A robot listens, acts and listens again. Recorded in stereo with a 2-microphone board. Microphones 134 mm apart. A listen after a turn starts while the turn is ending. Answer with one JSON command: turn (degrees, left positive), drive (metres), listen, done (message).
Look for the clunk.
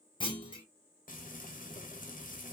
{"turn": 35}
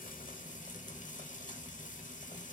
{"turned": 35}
{"listen": true}
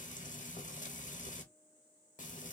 {"done": "I heard a clunk, but can't make it out now. It was about straight ahead or 110° left."}